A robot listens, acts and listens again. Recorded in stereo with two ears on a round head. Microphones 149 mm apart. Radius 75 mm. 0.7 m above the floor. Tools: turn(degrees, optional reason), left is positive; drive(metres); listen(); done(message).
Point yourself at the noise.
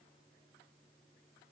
listen()
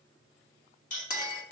turn(degrees=55, reason="The clink: about 55° left or 125° left.")
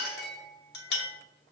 turn(degrees=70, reason="So it is at 70° left.")
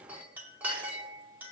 turn(degrees=-10, reason="The clink is now 10° right.")
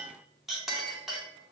done("Facing the clink, under 1 m away.")